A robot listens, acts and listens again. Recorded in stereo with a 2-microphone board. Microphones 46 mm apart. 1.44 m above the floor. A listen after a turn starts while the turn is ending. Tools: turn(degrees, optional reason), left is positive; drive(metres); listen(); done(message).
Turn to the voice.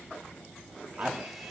turn(degrees=-40, reason="The man speaking: about 40° right or 140° right.")
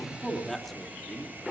done("Facing the man speaking, 2 to 4 m away.")